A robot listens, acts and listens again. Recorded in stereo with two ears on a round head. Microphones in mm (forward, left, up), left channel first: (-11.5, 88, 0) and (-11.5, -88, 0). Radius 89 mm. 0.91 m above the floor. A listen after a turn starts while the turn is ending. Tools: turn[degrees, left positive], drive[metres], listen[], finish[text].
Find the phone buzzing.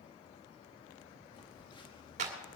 Thought: The phone buzzing: about 25° left or 155° left.
Action: turn[25]
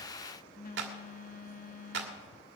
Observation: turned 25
Thought: So it is at 130° left.
Action: turn[130]
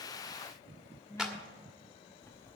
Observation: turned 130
Thought: The phone buzzing is now 15° left.
Action: turn[15]
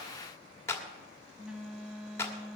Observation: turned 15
Action: finish[Facing the phone buzzing.]